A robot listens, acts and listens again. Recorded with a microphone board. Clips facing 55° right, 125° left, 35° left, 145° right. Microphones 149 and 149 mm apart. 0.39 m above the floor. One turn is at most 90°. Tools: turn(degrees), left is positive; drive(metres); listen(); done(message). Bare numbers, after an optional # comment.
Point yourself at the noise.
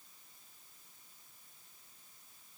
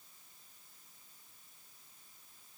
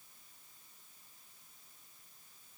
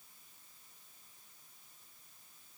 listen()
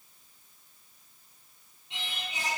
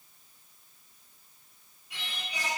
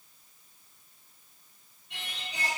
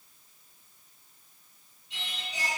done("Found it: singing, straight ahead.")